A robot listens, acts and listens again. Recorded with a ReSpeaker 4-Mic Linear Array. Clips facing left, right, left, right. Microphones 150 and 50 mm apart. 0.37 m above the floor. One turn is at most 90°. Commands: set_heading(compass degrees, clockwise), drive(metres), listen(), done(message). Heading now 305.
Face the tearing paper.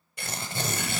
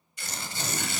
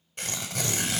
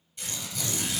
set_heading(245)
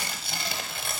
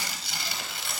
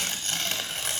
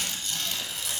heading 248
set_heading(193)
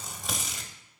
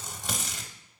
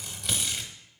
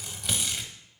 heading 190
done("Facing the tearing paper, under 1 m away.")